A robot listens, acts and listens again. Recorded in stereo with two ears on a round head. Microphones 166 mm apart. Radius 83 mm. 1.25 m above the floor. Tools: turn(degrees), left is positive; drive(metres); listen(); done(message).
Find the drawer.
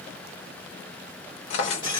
turn(degrees=70)
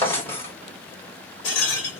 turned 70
turn(degrees=15)
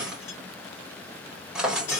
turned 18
done("Facing the drawer.")